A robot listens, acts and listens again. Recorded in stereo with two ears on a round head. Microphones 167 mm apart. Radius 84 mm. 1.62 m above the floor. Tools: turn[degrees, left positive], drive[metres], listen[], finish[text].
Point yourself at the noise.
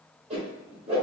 Thought: The whoosh: about 35° right or 145° right.
Action: turn[-35]
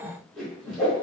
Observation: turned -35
Action: finish[Found it: a whoosh, straight ahead.]